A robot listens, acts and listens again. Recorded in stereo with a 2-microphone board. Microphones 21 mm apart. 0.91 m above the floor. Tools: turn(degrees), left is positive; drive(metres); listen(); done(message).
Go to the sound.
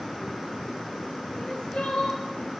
turn(degrees=90)
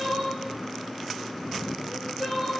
turn(degrees=-15)
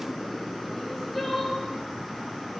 drive(metres=1.0)
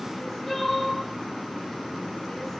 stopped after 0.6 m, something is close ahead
done("Blocked. The crying is further on, straight ahead.")